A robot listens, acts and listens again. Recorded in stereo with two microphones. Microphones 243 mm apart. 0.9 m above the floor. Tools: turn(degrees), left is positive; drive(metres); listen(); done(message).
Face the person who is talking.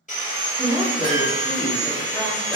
turn(degrees=-30)
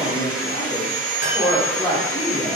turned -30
turn(degrees=20)
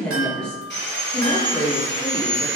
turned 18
done("Facing the woman speaking.")